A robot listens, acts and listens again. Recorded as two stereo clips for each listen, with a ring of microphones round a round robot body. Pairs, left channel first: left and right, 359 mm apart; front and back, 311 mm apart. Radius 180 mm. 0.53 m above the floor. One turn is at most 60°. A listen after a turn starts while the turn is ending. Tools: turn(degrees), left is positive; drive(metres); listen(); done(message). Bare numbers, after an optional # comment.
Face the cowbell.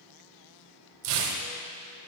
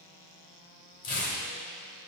listen()
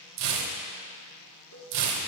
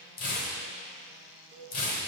# The cowbell: 125° left.
turn(60)
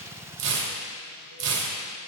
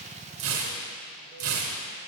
# Nothing new. It was at 65° left.
turn(60)
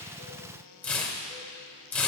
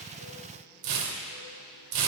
listen()
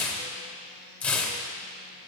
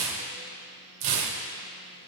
done("Facing where the cowbell came from. I can't hear it now.")